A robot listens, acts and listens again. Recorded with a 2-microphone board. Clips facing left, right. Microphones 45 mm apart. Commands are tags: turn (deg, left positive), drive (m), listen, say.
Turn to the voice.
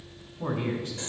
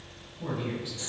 <turn deg="65"/>
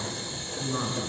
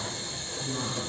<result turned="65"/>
<turn deg="50"/>
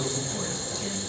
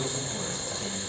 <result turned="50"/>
<turn deg="15"/>
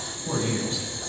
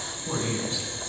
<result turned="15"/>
<say>Facing the man speaking, over 4 m away.</say>